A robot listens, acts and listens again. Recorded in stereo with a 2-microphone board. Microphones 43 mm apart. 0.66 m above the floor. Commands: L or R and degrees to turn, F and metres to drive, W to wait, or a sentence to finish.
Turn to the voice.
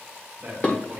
R45
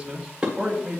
Found it: a man speaking, straight ahead.